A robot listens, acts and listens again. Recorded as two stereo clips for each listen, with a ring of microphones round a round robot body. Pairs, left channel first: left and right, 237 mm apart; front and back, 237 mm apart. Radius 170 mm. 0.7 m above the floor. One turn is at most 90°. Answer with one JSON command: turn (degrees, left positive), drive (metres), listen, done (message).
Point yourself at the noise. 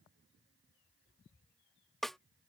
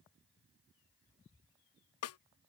{"done": "Found it: a snare drum, straight ahead."}